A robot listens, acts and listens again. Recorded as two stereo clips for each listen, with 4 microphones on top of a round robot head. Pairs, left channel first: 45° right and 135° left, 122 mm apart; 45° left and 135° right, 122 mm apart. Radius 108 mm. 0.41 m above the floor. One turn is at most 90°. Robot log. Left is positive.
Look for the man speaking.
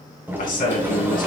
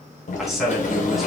note: The man speaking: 45° right.
cmd yaw -45
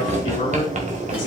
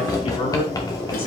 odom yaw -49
cmd idle
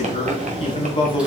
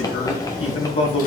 end: Found it: a man speaking, straight ahead, 2 to 4 m away.